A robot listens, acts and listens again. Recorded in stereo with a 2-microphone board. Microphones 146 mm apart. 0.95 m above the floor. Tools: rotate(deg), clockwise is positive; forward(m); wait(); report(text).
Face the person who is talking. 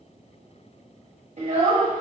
rotate(55)
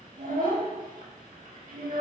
rotate(65)
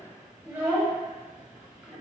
report("Found it: a child speaking, straight ahead, under 1 m away.")